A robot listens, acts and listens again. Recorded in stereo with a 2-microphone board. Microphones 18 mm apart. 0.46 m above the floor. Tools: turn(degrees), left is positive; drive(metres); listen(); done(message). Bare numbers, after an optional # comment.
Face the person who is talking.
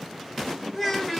turn(30)
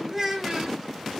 # So it is at 20° right.
turn(-20)
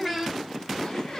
done("Found it: a child speaking, straight ahead.")